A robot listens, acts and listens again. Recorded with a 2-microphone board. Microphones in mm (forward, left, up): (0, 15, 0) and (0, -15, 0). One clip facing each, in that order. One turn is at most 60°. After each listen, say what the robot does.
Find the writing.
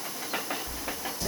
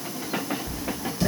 Turn 60° right.
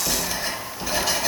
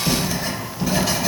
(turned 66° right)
Facing the writing.